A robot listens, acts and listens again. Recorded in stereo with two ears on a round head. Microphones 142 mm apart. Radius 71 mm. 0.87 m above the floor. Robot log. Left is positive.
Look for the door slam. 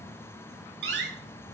cmd yaw -90
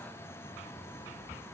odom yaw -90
end: I heard a door slam from this way, but can't make it out now.